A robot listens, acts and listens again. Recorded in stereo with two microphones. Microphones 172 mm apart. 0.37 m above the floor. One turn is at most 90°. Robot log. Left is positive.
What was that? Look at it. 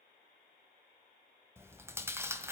cmd yaw -30
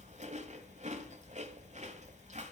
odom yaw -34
note: So it is at 130° right.
cmd yaw -90
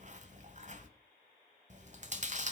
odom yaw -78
note: The chewing is now 50° right.
cmd yaw -50
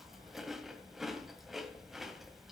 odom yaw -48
end: Facing the chewing, 1 to 2 m away.